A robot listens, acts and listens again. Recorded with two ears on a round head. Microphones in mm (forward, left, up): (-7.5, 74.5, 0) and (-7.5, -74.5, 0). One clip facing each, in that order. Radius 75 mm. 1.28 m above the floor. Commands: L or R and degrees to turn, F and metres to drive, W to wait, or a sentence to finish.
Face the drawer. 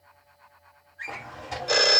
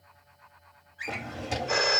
R30
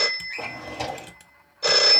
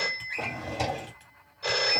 Facing the drawer, 1 to 2 m away.